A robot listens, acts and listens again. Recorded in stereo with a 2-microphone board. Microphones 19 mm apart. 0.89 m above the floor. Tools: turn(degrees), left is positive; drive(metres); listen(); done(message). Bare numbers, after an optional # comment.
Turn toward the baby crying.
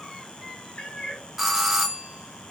listen()
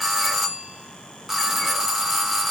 listen()
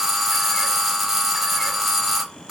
done("I can't make out a baby crying to turn to.")